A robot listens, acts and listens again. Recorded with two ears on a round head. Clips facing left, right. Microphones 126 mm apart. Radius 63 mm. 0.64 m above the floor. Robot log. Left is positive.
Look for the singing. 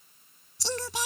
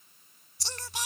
note: The singing: about 70° left or 110° left.
cmd yaw +70
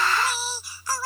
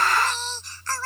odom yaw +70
note: So it is at 10° left.
cmd yaw +10
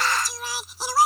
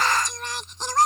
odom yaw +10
end: Found it: singing, straight ahead.